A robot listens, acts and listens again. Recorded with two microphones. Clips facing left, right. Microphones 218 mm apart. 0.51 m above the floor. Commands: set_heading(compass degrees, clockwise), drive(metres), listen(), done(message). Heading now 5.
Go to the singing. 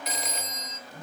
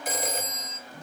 listen()
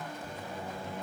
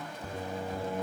set_heading(65)
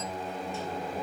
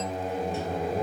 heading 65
set_heading(120)
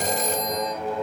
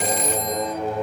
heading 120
set_heading(140)
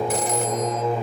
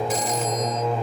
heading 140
drive(1.0)
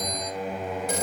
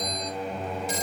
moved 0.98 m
drive(1.0)
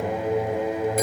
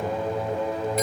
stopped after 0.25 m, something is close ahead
set_heading(125)
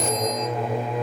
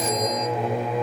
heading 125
done("Arrived at the singing, straight ahead.")